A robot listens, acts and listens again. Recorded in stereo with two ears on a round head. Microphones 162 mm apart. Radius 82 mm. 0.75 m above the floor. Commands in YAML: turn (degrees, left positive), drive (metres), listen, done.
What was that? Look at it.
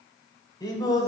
turn: 25
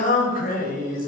turn: 125
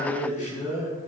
turn: 40
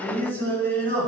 turn: 10
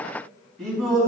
done: "Facing the singing, over 4 m away."